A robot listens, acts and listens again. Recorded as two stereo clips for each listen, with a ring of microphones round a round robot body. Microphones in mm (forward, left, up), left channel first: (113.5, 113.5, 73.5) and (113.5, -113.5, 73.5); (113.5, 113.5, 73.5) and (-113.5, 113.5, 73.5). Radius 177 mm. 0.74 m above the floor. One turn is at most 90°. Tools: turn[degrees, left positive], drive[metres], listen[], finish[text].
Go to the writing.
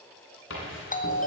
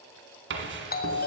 Thought: The writing: 145° left.
Action: turn[90]
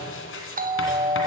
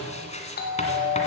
Thought: The writing is now 60° left.
Action: turn[60]
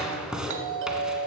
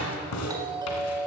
Action: drive[1.0]
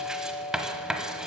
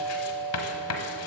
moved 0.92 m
Action: drive[1.0]
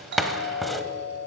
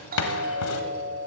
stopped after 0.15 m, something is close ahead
Action: finish[I am next to the writing.]